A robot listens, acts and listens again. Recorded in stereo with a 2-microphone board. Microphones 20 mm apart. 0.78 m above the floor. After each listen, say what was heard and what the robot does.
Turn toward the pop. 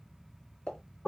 Turn 90° left.
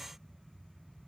Facing where the pop came from. I can't hear it now.